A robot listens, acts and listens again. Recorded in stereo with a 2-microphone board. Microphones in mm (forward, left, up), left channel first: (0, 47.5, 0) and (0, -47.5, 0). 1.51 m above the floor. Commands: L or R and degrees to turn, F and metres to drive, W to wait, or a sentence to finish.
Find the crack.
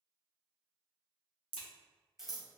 L70
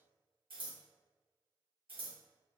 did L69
W
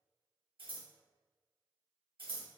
I heard a crack, but can't make it out now. It was about 5° left or 40° left.